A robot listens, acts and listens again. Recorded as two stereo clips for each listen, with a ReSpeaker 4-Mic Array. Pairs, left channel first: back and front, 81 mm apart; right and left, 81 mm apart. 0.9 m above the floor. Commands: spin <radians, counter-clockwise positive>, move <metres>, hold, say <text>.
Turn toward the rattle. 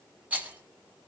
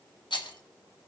spin -1.22
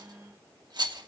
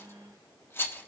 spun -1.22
spin -0.52
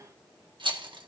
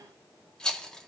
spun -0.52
spin -0.17
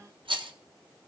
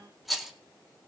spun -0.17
say Found it: a rattle, straight ahead.